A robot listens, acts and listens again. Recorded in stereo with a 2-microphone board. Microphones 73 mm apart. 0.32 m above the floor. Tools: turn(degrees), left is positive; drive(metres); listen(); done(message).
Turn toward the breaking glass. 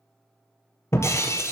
turn(degrees=40)
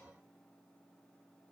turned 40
listen()
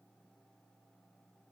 done("I heard breaking glass, but can't make it out now. It was about straight ahead or 100° left.")